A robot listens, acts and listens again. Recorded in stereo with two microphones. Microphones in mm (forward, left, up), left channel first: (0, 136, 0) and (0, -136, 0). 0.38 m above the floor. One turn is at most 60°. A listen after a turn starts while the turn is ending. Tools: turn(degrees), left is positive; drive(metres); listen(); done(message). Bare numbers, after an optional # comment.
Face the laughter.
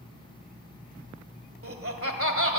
# The laughter: about 55° right or 125° right.
turn(-55)
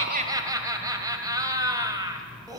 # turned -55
# So it is at 15° right.
turn(-15)
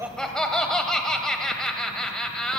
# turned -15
done("Found it: laughter, straight ahead, 1 to 2 m away.")